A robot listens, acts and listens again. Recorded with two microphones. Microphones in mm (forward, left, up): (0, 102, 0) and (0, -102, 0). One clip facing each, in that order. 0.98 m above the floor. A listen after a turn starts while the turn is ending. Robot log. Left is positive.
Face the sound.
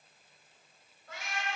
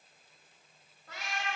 note: The cat meowing: about 60° right or 120° right.
cmd yaw -60
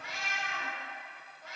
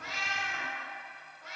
note: So it is at 85° right.
cmd yaw -85
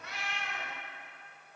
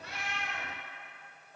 note: The cat meowing is now 10° right.
cmd yaw -10
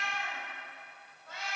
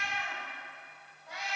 note: The cat meowing is now 15° right.
cmd yaw -15
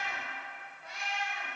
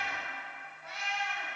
end: Found it: a cat meowing, straight ahead.